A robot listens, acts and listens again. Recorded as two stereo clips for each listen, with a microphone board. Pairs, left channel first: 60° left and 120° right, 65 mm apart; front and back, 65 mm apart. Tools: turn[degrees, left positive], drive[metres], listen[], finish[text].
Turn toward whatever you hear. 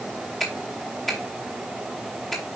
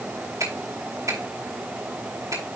Thought: The finger snap: 150° left.
Action: turn[150]
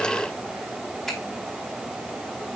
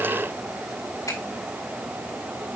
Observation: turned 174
Thought: Nothing new. It was at 25° right.
Action: turn[-25]
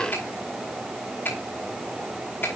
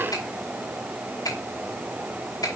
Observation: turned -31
Action: finish[Facing the finger snap, over 4 m away.]